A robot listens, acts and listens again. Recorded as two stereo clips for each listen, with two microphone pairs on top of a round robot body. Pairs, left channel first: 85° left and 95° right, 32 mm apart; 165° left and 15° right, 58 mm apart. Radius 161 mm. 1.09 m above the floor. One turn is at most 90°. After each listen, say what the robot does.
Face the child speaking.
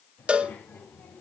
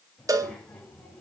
Turn 85° left.
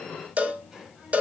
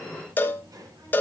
Turn 25° right.
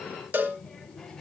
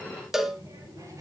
Turn 10° left.
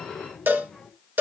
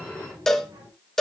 Found it: a child speaking, straight ahead.